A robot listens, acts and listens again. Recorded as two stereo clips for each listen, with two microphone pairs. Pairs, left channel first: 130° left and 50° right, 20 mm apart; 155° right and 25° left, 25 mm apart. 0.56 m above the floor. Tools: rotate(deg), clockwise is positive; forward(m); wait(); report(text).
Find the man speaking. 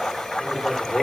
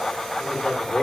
rotate(160)
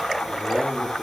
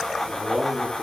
rotate(30)
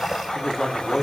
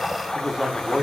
rotate(-70)
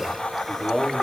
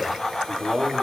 rotate(-50)
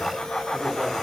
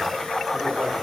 wait()
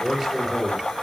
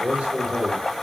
rotate(-15)
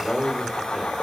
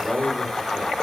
report("Found it: a man speaking, straight ahead, 1 to 2 m away.")